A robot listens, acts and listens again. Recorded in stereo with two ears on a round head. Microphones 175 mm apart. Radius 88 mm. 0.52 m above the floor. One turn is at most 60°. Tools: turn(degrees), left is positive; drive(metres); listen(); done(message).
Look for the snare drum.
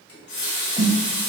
turn(degrees=-20)
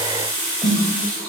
done("Facing the snare drum.")